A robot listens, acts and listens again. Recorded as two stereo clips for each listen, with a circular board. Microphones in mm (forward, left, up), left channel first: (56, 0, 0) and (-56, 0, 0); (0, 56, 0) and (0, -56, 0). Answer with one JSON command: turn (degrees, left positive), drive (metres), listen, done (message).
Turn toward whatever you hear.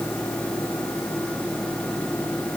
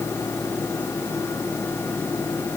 {"listen": true}
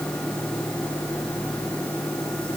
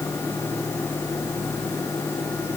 {"listen": true}
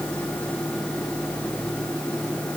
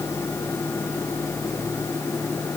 {"done": "I can't make out anything."}